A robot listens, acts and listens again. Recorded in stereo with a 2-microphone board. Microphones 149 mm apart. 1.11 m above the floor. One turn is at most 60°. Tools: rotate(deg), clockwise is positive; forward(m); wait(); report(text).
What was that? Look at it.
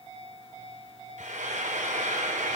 rotate(60)
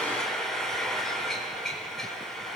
report("Facing the frying, over 4 m away.")